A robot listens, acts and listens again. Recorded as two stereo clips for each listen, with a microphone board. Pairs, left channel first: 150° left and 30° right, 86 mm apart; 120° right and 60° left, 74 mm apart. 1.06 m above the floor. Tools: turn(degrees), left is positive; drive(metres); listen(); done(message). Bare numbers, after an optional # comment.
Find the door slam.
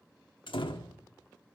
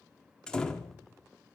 # The door slam: 160° left.
turn(160)
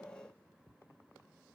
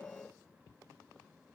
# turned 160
done("I heard a door slam from this way, but can't make it out now.")